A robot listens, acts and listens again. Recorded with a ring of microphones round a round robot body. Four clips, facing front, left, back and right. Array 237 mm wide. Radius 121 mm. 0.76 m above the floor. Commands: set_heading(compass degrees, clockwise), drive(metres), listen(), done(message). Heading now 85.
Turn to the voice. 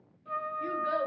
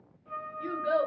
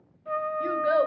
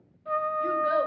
set_heading(265)
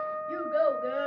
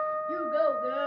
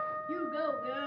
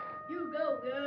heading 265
set_heading(240)
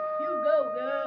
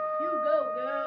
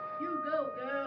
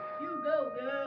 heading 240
done("Found it: a child speaking, straight ahead.")